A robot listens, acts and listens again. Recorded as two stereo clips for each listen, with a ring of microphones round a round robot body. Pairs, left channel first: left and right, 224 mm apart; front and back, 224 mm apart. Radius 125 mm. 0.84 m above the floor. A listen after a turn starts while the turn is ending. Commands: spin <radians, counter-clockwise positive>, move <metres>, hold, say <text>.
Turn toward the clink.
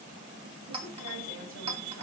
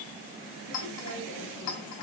spin -0.44
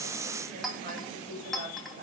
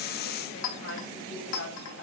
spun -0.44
say Found it: a clink, straight ahead, 2 to 4 m away.